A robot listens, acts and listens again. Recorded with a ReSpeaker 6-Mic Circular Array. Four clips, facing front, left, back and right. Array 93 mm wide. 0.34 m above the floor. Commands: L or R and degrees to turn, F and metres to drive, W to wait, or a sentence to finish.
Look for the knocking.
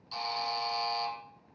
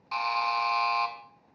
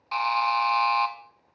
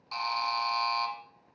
W
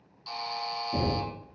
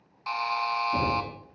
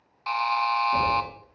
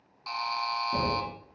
R130
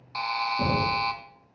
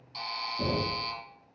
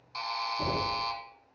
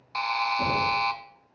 Found it: knocking, straight ahead, 2 to 4 m away.